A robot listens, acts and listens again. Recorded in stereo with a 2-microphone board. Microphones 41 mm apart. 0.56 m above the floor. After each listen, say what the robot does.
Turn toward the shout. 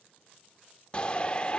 Turn 30° left.
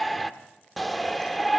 Found it: a shout, straight ahead, 1 to 2 m away.